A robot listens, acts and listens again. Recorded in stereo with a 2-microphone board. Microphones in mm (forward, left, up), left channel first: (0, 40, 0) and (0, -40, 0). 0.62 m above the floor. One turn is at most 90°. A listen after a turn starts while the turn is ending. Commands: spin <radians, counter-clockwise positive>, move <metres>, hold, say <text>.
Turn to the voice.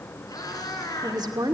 spin -0.96
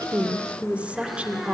spin -0.26
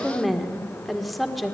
say Facing the woman speaking.